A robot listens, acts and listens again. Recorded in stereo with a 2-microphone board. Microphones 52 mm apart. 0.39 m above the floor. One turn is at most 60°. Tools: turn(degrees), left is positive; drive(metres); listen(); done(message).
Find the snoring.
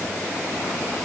listen()
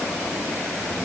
listen()
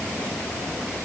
done("I can't make out snoring to turn to.")